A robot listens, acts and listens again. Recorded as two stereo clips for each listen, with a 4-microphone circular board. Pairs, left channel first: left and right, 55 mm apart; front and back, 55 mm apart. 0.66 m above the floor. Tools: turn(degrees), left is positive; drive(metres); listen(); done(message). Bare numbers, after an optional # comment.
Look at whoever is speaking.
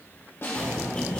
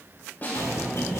# The child speaking: 140° left.
turn(140)
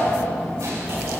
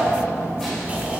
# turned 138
done("Found it: a child speaking, straight ahead.")